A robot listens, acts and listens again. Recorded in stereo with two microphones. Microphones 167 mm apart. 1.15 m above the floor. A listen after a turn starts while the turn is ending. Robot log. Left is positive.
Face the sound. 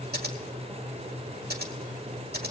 cmd yaw -90
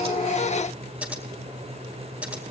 note: So it is at 10° right.
cmd yaw -10
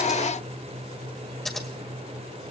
end: Facing the scissors.